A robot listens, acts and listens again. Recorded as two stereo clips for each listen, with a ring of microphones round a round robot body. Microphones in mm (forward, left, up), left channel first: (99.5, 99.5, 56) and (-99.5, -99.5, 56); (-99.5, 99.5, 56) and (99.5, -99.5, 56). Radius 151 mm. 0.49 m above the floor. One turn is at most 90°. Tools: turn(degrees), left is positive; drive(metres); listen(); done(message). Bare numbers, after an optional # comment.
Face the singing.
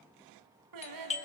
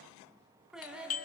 # The singing: 130° right.
turn(-90)
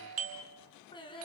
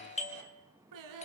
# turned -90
# The singing is now 30° right.
turn(-30)
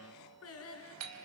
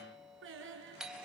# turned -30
done("Found it: singing, straight ahead.")